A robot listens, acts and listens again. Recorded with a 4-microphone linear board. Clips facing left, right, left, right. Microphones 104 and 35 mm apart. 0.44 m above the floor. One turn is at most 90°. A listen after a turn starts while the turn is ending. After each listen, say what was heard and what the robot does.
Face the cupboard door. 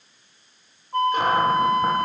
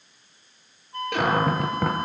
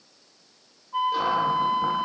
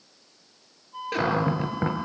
Turn 90° right.
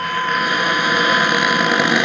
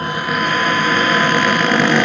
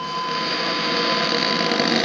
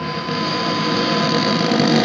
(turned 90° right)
So it is at 10° left. Turn 10° left.
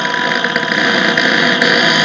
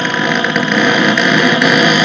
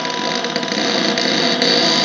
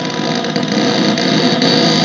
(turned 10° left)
Facing the cupboard door, over 4 m away.